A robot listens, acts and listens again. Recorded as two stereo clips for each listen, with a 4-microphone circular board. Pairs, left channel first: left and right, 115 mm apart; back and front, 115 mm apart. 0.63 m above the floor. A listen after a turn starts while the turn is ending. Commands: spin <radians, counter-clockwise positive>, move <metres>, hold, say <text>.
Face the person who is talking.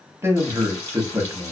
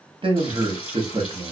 spin -0.44
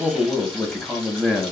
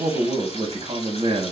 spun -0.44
say Facing the man speaking, under 1 m away.